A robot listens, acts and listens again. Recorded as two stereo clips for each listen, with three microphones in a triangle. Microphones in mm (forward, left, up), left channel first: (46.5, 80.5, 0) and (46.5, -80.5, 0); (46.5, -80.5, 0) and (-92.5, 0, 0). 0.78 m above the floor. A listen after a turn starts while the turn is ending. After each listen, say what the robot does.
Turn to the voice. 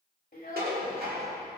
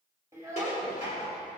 Turn 80° left.
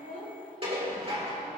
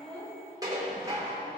Keep listening.
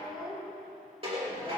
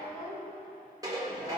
Facing the child speaking.